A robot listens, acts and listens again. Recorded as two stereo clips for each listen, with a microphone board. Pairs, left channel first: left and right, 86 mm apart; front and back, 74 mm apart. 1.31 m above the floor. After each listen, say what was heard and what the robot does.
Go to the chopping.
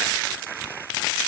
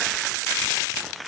Keep listening.
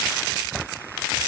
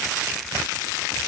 Keep listening.
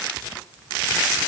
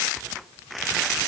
I can't make out chopping.